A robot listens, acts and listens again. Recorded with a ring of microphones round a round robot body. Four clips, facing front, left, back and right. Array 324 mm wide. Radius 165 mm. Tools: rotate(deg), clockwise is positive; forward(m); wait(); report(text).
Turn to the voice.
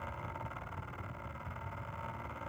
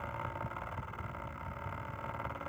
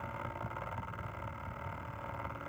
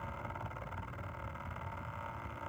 wait()
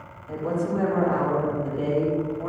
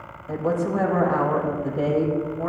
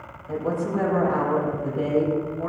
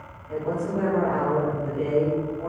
rotate(-95)
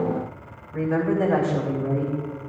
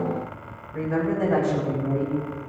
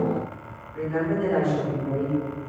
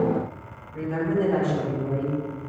rotate(-20)
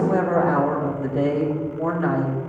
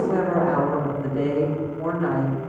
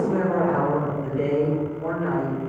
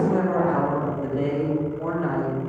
report("Found it: a woman speaking, straight ahead.")